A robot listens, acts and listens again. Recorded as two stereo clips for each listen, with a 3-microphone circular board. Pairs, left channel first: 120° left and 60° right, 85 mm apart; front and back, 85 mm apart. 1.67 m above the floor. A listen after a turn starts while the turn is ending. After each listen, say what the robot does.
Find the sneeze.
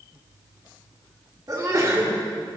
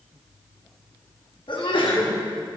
Turn 15° right.
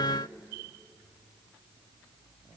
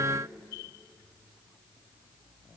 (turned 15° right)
Facing where the sneeze came from. I can't hear it now.